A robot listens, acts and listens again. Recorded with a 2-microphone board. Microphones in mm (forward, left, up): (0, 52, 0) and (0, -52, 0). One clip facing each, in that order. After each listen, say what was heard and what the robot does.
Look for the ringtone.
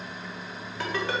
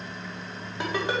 The ringtone: about 20° right or 160° right. Turn 20° right.
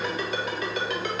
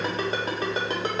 So it is at 145° right. Turn 145° right.
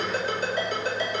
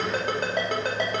The ringtone is now 65° right. Turn 65° right.
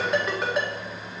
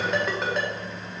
Facing the ringtone, 1 to 2 m away.